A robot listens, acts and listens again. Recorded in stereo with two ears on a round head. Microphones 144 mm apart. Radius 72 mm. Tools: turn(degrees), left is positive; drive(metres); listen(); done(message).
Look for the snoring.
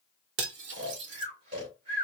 turn(degrees=-40)
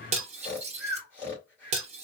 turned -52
turn(degrees=10)
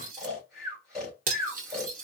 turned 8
done("Facing the snoring.")